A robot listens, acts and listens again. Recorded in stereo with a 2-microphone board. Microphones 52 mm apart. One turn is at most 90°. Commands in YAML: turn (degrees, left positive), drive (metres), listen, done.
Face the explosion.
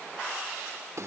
listen: true
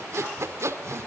listen: true
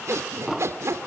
turn: -30
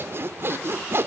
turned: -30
listen: true
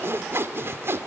done: "I heard an explosion, but can't make it out now. It was about 20° left or 140° right."